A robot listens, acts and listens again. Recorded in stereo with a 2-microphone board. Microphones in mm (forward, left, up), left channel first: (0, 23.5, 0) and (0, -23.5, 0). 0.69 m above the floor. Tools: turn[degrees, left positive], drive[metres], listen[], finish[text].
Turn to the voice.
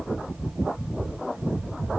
Action: listen[]
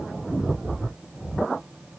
Action: listen[]
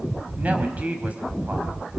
Thought: The woman speaking: about 35° right or 145° right.
Action: turn[-35]
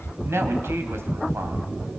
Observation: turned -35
Thought: So it is at 110° right.
Action: turn[-110]
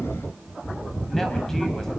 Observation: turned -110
Action: listen[]
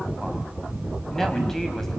Thought: The woman speaking is now 10° left.
Action: turn[10]
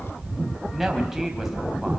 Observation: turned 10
Action: finish[Found it: a woman speaking, straight ahead, over 4 m away.]